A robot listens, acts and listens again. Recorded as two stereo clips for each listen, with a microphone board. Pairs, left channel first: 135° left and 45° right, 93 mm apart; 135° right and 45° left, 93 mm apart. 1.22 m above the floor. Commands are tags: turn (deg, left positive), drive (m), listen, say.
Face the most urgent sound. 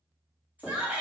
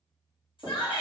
<turn deg="-115"/>
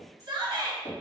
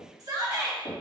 <say>Facing the shout, 1 to 2 m away.</say>